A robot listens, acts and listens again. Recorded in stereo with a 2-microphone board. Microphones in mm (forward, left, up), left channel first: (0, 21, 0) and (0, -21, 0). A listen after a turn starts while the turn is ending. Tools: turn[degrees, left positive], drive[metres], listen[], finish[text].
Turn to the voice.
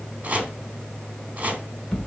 Action: listen[]
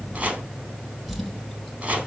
Action: listen[]
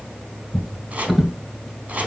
Action: finish[I can't make out anyone speaking to turn to.]